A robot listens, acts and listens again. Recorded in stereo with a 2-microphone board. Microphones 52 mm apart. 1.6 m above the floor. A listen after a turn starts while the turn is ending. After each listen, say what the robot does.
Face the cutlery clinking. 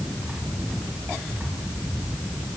Keep listening.
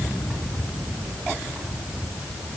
Keep listening.
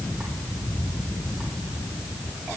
I can't make out cutlery clinking.